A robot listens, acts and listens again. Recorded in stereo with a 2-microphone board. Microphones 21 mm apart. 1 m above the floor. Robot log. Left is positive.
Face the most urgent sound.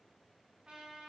cmd idle
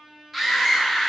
cmd yaw -30
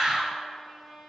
note: So it is at 140° right.
cmd yaw -140
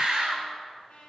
note: The scream is now 40° right.
cmd yaw -40
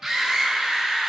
note: The scream is now 10° right.
cmd yaw -10
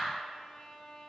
cmd idle
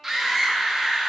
end: Facing the scream, 1 to 2 m away.